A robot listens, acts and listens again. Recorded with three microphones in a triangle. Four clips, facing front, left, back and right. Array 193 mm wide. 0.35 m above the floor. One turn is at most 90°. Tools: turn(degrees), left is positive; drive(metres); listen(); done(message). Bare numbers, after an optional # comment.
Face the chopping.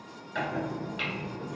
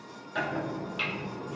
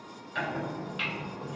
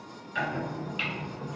# The chopping: 55° left.
turn(55)
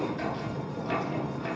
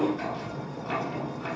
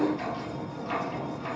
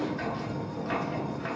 done("Facing the chopping.")